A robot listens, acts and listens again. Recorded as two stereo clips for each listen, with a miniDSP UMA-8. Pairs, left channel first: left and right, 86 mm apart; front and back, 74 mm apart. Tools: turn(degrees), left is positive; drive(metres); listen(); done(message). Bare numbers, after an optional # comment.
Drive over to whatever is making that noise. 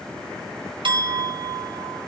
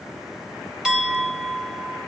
# The clink: 100° right.
turn(-100)
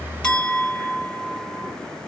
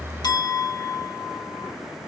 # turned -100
# The clink is now 10° left.
turn(10)
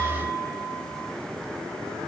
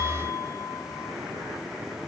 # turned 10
drive(1.0)
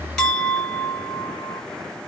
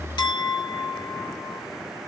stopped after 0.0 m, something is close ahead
done("Something is in my way. I am facing the clink but have not reached it.")